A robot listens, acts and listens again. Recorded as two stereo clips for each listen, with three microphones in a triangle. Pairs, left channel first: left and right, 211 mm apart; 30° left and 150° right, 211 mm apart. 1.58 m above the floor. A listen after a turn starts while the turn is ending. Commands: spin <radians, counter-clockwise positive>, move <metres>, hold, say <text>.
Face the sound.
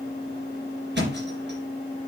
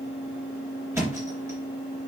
spin -1.31
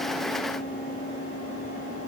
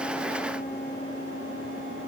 say I heard a thud from this way, but can't make it out now.